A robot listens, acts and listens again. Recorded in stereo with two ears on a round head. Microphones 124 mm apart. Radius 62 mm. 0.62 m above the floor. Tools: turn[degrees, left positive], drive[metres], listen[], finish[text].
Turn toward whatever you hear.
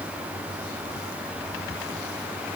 Action: listen[]
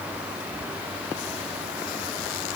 Action: listen[]
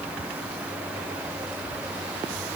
Action: finish[I can't make out anything to turn to.]